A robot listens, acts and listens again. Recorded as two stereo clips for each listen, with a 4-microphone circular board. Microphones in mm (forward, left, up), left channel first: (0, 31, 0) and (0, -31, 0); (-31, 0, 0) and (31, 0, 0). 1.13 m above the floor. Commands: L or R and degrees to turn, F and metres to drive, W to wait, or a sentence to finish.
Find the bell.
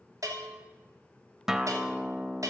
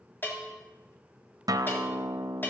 R125
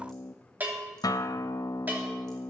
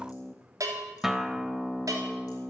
R30
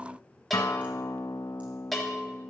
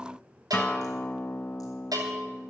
Found it: a bell, straight ahead.